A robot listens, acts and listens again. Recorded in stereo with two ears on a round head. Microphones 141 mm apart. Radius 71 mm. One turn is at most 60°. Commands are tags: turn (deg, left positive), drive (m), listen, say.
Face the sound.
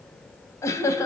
<turn deg="20"/>
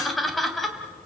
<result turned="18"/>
<say>Found it: laughter, straight ahead, 2 to 4 m away.</say>